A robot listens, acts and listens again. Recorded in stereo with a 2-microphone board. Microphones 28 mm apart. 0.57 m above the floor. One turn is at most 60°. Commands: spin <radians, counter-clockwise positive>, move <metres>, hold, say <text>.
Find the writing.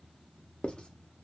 spin 0.61
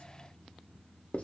spin 1.05
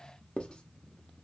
spin 0.70
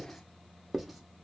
say Found it: writing, straight ahead, under 1 m away.